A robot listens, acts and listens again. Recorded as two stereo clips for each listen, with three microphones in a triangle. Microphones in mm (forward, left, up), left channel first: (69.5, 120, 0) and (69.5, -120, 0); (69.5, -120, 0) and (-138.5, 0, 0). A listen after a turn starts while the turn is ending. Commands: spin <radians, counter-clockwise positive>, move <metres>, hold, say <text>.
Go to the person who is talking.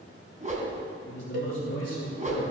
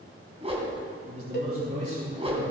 spin 1.66
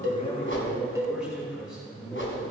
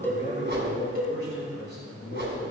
move 1.0
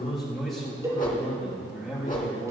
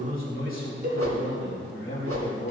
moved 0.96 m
move 1.0
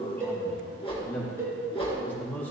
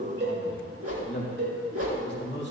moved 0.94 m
move 1.0
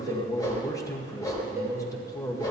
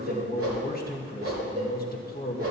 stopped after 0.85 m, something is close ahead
spin 0.26
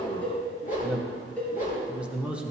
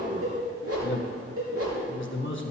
say Arrived at the man speaking, straight ahead.